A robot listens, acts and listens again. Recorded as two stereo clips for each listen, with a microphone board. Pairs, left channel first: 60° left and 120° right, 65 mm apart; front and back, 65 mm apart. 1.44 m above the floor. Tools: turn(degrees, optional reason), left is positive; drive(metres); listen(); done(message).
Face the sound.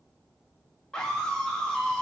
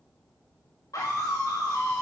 turn(degrees=-15, reason="The scream: 15° right.")
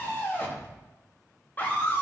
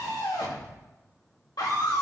done("Found it: a scream, straight ahead, 2 to 4 m away.")